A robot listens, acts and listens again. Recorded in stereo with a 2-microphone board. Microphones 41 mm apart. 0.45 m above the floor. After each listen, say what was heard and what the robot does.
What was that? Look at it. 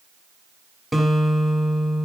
Turn 30° left.
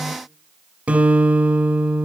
So it is at 30° right. Turn 30° right.
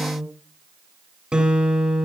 The guitar is now 15° right. Turn 15° right.
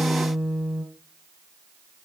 Found it: a guitar, straight ahead, 2 to 4 m away.